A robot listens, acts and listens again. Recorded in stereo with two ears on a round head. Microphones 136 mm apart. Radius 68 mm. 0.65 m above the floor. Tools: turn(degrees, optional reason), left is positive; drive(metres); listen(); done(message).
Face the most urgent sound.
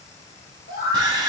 turn(degrees=65, reason="The scream: about 65° left or 115° left.")
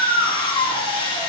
turn(degrees=20, reason="So it is at 20° left.")
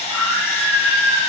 done("Facing the scream, 1 to 2 m away.")